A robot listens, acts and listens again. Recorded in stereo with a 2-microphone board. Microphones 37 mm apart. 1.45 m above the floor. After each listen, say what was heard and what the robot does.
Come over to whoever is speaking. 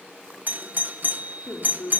The woman speaking: about 55° left or 125° left. Turn 55° left.
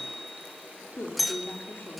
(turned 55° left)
So it is at 70° left. Turn 70° left.
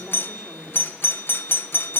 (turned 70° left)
Drive 1.0 m forward.
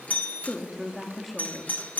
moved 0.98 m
Drive 1.0 m forward.
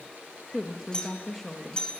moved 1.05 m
Drive 1.0 m forward.
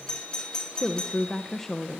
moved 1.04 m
The woman speaking is now 10° left. Turn 10° left.
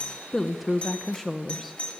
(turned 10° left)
Drive 1.0 m forward.
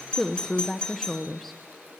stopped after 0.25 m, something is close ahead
Arrived at the woman speaking, straight ahead.